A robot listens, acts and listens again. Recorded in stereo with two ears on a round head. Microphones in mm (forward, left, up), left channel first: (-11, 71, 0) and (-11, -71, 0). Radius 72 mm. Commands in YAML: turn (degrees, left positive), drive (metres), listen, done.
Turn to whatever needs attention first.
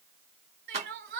turn: -65
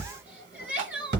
turn: -10
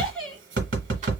done: "Facing the crying."